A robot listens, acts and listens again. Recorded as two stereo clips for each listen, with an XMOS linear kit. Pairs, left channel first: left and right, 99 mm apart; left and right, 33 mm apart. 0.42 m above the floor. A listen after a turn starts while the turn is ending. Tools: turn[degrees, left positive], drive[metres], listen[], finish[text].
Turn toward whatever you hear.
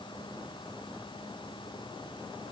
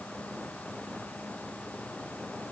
Action: listen[]
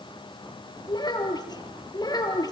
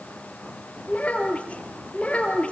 Thought: The child speaking: about 40° left or 140° left.
Action: turn[40]
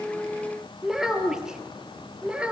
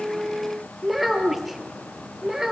Thought: So it is at 10° right.
Action: turn[-10]
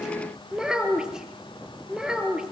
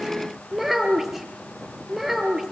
Action: finish[Found it: a child speaking, straight ahead.]